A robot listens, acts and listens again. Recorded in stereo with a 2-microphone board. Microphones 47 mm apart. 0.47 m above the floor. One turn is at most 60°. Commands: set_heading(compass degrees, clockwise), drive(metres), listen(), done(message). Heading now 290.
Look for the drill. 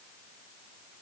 listen()
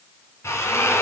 set_heading(230)
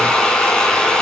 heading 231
set_heading(216)
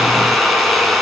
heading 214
done("Facing the drill, 2 to 4 m away.")